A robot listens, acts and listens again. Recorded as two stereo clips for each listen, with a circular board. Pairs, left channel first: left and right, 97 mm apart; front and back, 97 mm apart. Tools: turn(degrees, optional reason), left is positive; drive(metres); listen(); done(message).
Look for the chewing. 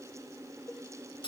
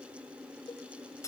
listen()
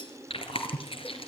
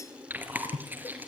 turn(degrees=110, reason="The chewing: 110° left.")
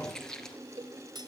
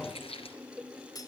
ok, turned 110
done("Found it: chewing, straight ahead, 2 to 4 m away.")